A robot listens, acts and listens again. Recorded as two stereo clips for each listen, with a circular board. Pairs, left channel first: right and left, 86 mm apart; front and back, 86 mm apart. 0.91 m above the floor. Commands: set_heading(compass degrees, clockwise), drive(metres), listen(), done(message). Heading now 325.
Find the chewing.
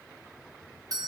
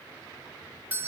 listen()
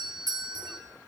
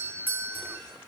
listen()
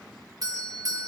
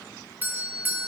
done("I can't make out chewing, only a doorbell.")